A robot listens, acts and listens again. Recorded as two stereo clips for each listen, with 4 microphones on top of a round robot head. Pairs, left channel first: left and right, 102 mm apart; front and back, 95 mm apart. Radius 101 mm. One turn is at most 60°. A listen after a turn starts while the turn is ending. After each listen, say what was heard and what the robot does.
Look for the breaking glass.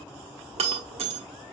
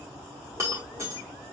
The breaking glass: 110° right. Turn 60° right.
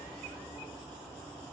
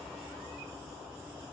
Nothing new. It was at 50° right. Turn 50° right.
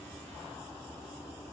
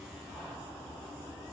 Facing where the breaking glass came from. I can't hear it now.